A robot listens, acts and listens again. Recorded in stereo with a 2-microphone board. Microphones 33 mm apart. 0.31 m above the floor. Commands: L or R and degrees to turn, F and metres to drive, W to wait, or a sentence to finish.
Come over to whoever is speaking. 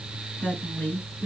L60
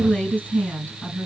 L60
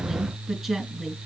F1.0
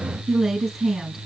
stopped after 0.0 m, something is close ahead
Blocked. The woman speaking is further on, straight ahead.